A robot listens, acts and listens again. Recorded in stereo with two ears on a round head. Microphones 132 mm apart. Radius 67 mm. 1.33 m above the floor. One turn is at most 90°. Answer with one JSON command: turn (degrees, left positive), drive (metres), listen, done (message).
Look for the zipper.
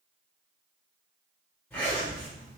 {"turn": 30}
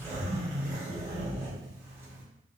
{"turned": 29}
{"turn": -15}
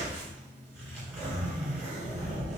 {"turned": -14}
{"done": "Found it: a zipper, straight ahead."}